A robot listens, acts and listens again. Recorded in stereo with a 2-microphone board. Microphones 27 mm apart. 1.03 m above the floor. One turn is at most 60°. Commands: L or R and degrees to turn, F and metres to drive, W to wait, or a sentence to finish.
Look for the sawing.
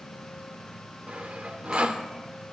R60
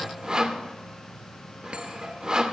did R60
R35
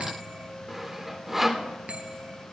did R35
R10
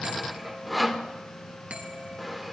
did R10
Found it: sawing, straight ahead.